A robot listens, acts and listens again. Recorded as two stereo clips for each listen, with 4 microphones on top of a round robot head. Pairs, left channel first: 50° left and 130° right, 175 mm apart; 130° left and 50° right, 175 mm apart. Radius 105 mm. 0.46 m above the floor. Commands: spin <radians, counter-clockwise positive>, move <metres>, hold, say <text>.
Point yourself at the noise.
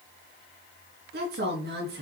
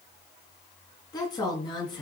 spin -2.88
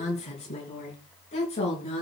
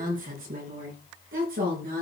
spin -0.17
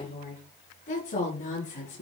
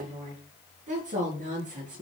say Facing the woman speaking, over 4 m away.